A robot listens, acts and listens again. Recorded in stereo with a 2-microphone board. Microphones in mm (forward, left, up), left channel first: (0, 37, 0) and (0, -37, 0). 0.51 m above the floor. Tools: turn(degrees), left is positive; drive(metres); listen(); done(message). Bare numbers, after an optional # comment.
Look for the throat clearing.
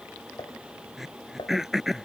turn(-30)
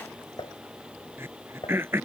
# So it is at 145° right.
turn(-145)
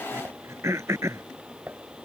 # The throat clearing is now 40° right.
turn(-40)
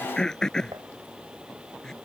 # The throat clearing is now 10° left.
turn(10)
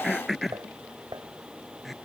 done("Found it: throat clearing, straight ahead.")